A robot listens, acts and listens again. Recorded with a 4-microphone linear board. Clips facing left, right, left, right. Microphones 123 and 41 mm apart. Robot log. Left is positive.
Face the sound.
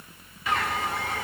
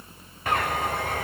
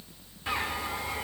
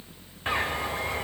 note: The bird: about 50° right or 130° right.
cmd yaw -50
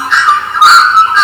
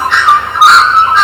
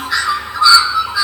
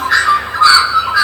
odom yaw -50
note: So it is at 70° right.
cmd yaw -70
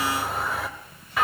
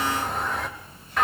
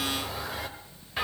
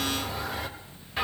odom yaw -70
end: Found it: a bird, straight ahead, under 1 m away.